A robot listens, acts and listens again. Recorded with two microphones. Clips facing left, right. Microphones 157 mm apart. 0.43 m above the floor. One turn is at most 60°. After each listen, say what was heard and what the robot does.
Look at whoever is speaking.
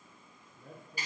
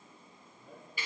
The man speaking: about 60° left or 120° left. Turn 60° left.
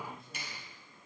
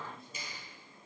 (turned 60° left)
Facing the man speaking, over 4 m away.